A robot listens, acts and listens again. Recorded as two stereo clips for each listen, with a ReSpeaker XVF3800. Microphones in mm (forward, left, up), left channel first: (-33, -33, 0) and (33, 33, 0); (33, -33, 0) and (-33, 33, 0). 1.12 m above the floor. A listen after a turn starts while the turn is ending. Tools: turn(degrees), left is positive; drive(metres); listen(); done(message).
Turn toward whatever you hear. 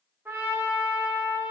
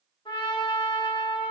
turn(degrees=-20)
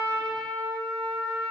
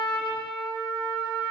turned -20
done("Facing the trumpet.")